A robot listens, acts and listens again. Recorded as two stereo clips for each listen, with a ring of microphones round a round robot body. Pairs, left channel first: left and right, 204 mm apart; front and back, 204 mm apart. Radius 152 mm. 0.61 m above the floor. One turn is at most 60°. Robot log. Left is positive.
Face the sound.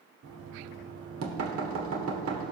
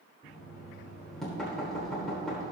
note: The knocking: 90° right.
cmd yaw -60
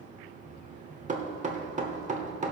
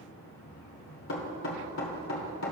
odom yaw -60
note: The knocking is now 30° right.
cmd yaw -30
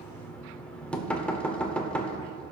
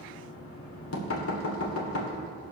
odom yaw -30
end: Found it: knocking, straight ahead, 1 to 2 m away.